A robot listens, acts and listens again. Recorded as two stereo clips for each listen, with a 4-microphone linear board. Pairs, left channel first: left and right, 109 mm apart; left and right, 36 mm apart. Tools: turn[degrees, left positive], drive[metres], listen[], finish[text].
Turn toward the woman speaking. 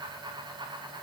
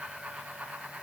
Action: listen[]
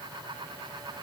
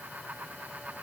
Action: listen[]
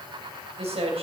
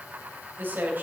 Thought: The woman speaking: about 70° right or 110° right.
Action: turn[-70]
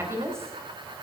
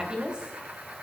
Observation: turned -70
Thought: So it is at 25° right.
Action: turn[-25]
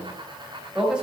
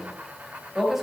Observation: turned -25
Thought: The woman speaking is now 10° right.
Action: turn[-10]
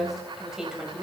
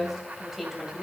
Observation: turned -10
Thought: The woman speaking is now 10° right.
Action: turn[-10]
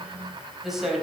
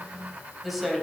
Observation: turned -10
Action: finish[Found it: a woman speaking, straight ahead, 2 to 4 m away.]